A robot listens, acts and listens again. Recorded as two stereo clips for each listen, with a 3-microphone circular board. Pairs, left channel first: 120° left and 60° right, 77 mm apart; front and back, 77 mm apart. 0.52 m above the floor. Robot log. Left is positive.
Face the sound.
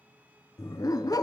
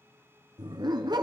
note: The dog barking: 160° left.
cmd yaw +160
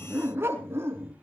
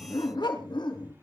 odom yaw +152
end: Facing the dog barking.